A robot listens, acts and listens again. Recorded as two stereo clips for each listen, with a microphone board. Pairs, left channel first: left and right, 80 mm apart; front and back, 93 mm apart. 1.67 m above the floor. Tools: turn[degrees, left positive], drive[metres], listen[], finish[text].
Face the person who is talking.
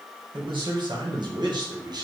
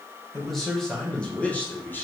Thought: The man speaking: 65° right.
Action: turn[-65]
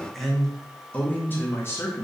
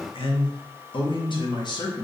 Thought: The man speaking is now 40° left.
Action: turn[40]
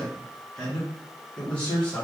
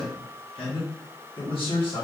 Thought: The man speaking is now 20° left.
Action: turn[20]
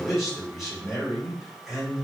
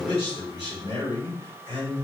Action: finish[Facing the man speaking.]